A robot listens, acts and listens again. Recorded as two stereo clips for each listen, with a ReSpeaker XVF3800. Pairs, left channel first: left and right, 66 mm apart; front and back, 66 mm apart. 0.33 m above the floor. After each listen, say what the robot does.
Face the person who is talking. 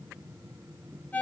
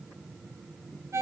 Keep listening.
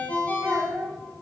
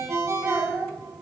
Turn 125° right.
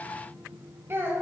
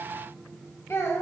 Turn 45° right.
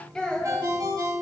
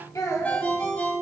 Turn 15° left.
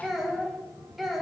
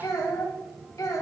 Facing the child speaking, 1 to 2 m away.